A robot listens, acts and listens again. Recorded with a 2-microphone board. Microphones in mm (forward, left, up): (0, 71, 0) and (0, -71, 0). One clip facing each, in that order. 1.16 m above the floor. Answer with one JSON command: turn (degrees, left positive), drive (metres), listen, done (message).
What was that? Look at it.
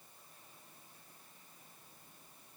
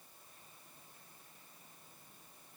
{"listen": true}
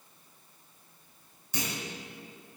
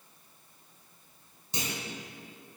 {"turn": -30}
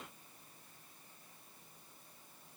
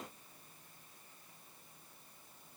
{"listen": true}
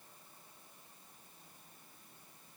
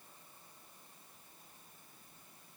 {"done": "I heard a clunk, but can't make it out now. It was about straight ahead or 120° right."}